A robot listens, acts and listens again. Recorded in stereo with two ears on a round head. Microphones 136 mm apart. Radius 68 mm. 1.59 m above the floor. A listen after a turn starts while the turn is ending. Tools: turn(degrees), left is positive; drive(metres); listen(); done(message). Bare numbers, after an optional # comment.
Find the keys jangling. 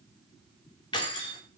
# The keys jangling: about 35° left or 145° left.
turn(35)
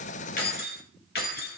# So it is at 110° left.
turn(110)
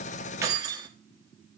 # The keys jangling is now 30° right.
turn(-30)
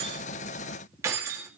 # The keys jangling is now 20° right.
turn(-20)
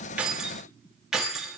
done("Facing the keys jangling.")